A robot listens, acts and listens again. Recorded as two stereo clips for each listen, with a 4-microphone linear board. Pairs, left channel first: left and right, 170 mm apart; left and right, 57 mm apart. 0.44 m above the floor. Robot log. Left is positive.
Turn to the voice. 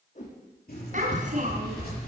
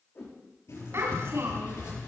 note: The child speaking: about 50° right or 130° right.
cmd yaw -50
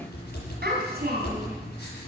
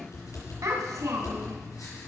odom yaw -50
note: So it is at 75° right.
cmd yaw -75
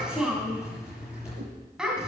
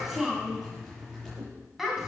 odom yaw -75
end: Found it: a child speaking, straight ahead.